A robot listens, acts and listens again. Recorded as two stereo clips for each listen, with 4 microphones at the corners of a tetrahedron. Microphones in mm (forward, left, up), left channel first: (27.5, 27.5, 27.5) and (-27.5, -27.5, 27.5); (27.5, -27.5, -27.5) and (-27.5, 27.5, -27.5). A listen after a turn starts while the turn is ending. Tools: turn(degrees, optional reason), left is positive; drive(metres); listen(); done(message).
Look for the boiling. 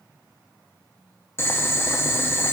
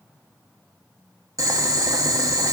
turn(degrees=100, reason="The boiling: 100° left.")
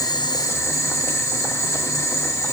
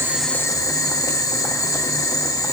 done("Facing the boiling, under 1 m away.")